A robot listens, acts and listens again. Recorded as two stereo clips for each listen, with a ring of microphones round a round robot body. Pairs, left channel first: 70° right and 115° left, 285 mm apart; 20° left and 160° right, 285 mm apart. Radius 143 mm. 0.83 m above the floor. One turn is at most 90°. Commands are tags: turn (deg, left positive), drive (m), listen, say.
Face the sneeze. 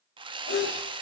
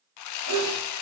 <turn deg="-90"/>
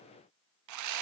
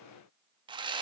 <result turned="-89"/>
<turn deg="-35"/>
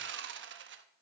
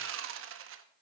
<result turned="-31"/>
<say>Facing where the sneeze came from. I can't hear it now.</say>